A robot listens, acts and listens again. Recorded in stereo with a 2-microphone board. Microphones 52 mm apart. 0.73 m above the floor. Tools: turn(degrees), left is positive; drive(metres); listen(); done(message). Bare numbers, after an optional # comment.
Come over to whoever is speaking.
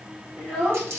# The child speaking: about 25° right or 155° right.
turn(-25)
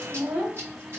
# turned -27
# So it is at 125° right.
turn(-125)
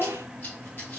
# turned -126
drive(1.0)
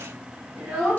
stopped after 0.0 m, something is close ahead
done("Something is in my way. I am facing the child speaking but have not reached it.")